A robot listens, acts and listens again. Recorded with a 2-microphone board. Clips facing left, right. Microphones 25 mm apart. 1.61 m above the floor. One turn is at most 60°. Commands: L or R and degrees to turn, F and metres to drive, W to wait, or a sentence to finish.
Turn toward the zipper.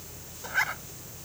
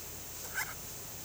L35
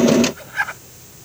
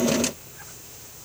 L60
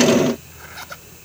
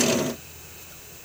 L50
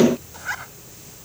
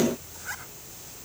L30
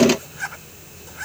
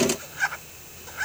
R10
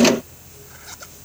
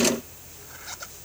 W
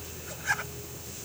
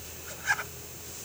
Facing the zipper.